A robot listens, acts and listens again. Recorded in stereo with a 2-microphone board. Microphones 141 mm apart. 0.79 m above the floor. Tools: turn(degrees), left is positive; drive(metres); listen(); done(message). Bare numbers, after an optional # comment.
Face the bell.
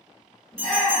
# The bell: about 60° left or 120° left.
turn(60)
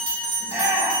# So it is at 55° left.
turn(55)
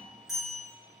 done("Facing the bell.")